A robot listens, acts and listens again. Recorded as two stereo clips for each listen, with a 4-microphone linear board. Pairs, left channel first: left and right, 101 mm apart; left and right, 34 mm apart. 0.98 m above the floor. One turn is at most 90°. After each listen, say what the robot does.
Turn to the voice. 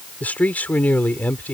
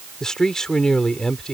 Turn 15° left.
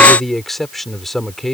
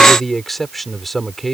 Found it: a man speaking, straight ahead.